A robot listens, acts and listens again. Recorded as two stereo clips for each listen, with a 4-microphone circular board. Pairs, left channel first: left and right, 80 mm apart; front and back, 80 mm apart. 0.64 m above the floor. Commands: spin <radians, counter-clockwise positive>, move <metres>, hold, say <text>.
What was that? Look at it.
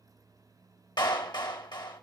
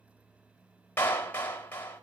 spin 1.13
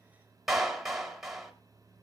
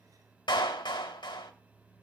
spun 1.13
say Found it: a clap, straight ahead, 2 to 4 m away.